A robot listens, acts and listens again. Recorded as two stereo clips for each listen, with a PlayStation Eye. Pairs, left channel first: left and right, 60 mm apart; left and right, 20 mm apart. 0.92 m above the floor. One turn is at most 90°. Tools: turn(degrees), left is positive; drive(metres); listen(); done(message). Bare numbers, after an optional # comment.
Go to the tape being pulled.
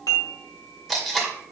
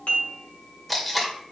turn(30)
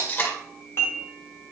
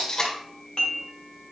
# So it is at 145° left.
turn(90)
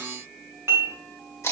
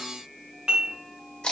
# The tape being pulled is now 50° left.
turn(50)
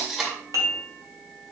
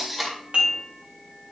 drive(1.0)
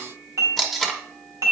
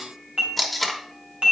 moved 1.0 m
drive(1.0)
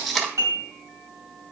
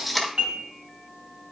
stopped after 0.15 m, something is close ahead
done("I am next to the tape being pulled.")